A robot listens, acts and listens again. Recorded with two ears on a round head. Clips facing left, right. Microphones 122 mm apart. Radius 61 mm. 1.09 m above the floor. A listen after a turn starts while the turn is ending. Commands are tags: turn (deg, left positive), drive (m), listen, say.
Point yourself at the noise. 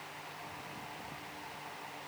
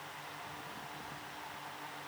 <listen/>
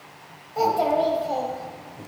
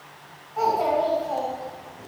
<turn deg="35"/>
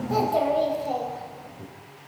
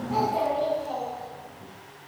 <turn deg="120"/>
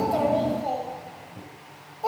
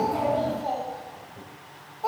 <turn deg="20"/>
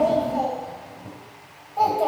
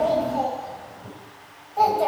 <say>Facing the child speaking, 2 to 4 m away.</say>